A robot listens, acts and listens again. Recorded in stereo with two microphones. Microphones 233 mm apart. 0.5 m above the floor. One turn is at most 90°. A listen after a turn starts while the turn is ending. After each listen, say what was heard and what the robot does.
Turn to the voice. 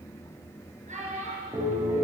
The child speaking: about 35° right or 145° right. Turn 35° right.
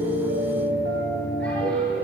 Keep listening.
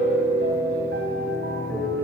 Keep listening.
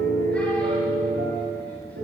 I heard a child speaking, but can't make it out now. It was about straight ahead or 110° right.